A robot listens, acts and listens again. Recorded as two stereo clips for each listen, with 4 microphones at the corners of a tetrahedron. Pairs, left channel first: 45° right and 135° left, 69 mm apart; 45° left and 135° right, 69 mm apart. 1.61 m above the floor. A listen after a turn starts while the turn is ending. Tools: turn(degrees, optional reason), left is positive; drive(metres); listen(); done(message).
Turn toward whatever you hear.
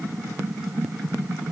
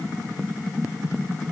listen()
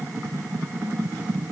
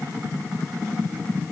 listen()
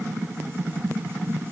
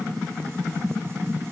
done("I can't make out anything.")